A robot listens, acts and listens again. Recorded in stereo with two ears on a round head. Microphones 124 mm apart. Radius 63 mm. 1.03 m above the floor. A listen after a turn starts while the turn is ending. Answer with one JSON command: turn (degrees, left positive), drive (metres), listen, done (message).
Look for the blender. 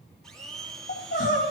{"turn": 30}
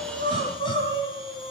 {"listen": true}
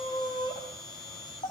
{"turn": 145}
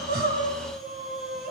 {"listen": true}
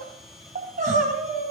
{"done": "Found it: a blender, straight ahead, 1 to 2 m away."}